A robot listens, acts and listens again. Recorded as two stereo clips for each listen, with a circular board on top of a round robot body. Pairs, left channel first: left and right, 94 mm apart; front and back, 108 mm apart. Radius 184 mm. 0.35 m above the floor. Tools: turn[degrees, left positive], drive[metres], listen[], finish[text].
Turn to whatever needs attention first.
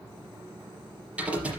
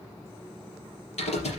Action: listen[]
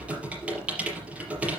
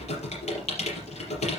Action: listen[]
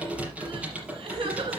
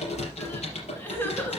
Thought: The crying: 70° right.
Action: turn[-70]
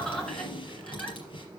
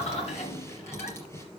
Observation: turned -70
Action: finish[Found it: crying, straight ahead, 2 to 4 m away.]